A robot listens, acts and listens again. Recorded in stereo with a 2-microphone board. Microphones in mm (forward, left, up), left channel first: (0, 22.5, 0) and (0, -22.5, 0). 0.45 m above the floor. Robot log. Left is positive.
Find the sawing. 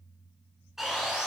cmd yaw -30
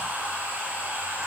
note: So it is at 145° right.
cmd yaw -145
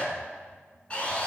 note: The sawing is now 25° left.
cmd yaw +25
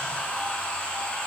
note: The sawing is now 20° left.
cmd yaw +20
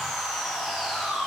end: Found it: sawing, straight ahead, 1 to 2 m away.